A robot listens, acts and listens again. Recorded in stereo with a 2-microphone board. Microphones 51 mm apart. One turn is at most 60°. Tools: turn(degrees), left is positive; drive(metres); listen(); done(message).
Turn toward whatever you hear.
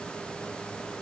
listen()
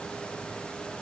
listen()
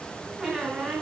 turn(degrees=30)
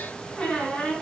turn(degrees=60)
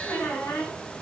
turn(degrees=60)
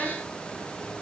turn(degrees=20)
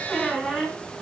done("Facing the squeak.")